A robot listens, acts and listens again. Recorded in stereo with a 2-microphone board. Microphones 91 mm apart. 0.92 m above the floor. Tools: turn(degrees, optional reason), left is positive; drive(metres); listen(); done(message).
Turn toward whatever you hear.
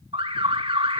turn(degrees=-90)
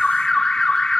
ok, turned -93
done("Found it: an alarm, straight ahead.")